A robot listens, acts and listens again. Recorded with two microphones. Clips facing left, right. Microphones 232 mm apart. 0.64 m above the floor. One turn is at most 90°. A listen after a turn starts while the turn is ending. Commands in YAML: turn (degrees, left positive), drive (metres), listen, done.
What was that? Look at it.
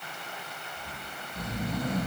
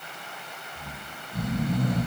turn: -60
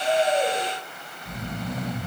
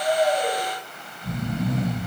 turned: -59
turn: -60
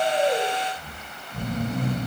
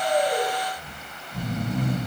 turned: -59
done: "Found it: snoring, straight ahead, 2 to 4 m away."